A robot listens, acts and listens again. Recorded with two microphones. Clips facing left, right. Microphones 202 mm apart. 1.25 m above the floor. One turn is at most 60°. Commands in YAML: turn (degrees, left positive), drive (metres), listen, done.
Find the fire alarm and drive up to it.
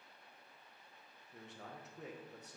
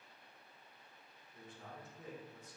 listen: true
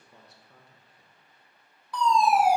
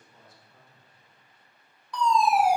turn: 30
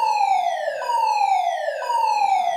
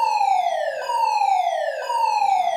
turn: -25
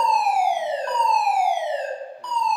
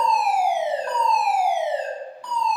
drive: 1.0
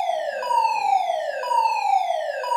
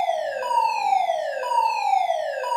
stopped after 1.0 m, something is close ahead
turn: -10
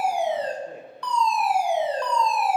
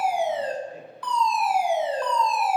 done: "Arrived at the fire alarm, straight ahead."